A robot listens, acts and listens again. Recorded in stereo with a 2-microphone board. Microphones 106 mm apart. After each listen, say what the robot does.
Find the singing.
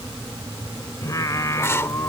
Turn 30° left.
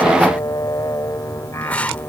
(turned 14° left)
Turn 25° left.
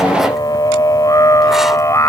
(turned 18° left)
Turn 30° left.
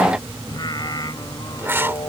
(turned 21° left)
Turn 40° left.
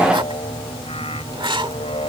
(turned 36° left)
Turn 110° left.
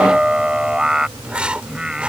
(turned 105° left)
Turn 10° right.
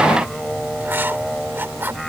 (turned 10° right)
Facing the singing.